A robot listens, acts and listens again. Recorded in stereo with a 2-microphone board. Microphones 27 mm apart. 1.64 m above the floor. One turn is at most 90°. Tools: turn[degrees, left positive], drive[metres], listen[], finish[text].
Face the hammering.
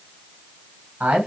Action: listen[]
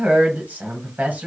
Action: listen[]
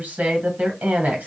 Action: finish[I can't make out hammering to turn to.]